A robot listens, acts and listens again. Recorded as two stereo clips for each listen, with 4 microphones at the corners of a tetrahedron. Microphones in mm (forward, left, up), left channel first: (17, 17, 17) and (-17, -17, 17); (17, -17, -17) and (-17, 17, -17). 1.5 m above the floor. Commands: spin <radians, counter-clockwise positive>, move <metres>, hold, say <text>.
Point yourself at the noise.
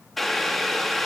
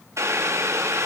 spin 2.27
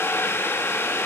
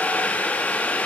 spin 0.17
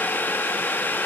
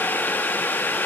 say Found it: boiling, straight ahead.